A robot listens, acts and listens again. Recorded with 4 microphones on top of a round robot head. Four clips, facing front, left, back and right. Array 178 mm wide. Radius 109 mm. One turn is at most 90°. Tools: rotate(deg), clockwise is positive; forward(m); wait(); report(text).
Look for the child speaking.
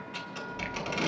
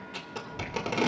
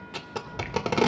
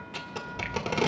rotate(-90)
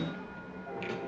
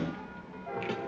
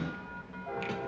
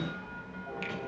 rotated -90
rotate(-80)
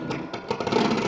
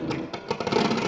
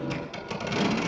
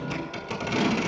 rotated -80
rotate(-20)
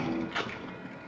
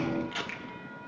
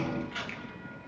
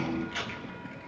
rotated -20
report("Found it: a child speaking, straight ahead.")